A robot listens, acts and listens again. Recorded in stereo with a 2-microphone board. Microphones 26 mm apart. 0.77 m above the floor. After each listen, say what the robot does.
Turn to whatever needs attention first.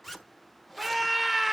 Turn 30° right.
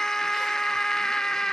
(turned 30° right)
Turn 25° left.
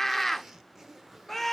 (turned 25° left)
Turn 10° left.
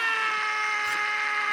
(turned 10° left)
Found it: a scream, straight ahead, under 1 m away.